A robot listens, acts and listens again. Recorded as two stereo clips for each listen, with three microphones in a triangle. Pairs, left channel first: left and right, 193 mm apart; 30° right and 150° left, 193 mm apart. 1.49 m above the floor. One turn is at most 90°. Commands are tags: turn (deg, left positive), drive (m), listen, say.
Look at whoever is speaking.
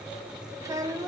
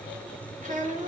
<turn deg="-90"/>
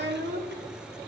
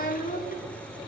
<turn deg="-70"/>
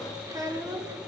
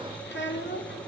<turn deg="-15"/>
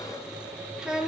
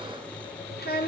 <say>Found it: a child speaking, straight ahead, 1 to 2 m away.</say>